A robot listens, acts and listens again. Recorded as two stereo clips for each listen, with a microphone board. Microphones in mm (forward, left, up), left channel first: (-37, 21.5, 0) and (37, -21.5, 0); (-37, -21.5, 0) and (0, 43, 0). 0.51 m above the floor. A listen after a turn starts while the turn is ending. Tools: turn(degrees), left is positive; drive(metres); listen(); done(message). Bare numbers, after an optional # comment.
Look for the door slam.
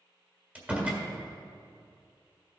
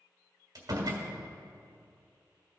# The door slam: 40° left.
turn(40)
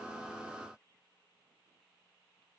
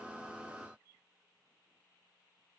done("Facing where the door slam came from. I can't hear it now.")